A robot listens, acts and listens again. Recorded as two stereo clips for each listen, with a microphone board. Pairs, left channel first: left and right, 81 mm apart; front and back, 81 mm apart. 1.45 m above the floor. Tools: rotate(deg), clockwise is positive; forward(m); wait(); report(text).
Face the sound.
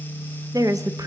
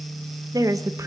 rotate(130)
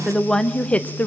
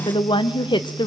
rotate(-20)
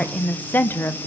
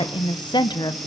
rotate(-30)
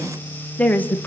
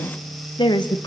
rotate(-25)
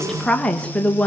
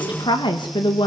rotate(-15)
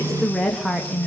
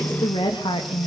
report("Facing the woman speaking, 2 to 4 m away.")